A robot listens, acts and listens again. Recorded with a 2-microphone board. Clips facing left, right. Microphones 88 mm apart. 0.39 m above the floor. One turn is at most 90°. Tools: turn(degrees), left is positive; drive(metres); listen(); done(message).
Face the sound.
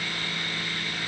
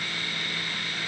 listen()
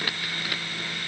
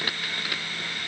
listen()
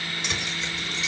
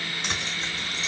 turn(degrees=-35)
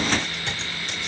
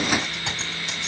turn(degrees=-90)
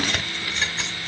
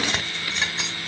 turn(degrees=-15)
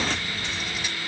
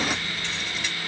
turn(degrees=15)
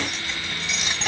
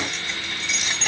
done("Found it: keys jangling, straight ahead, 1 to 2 m away.")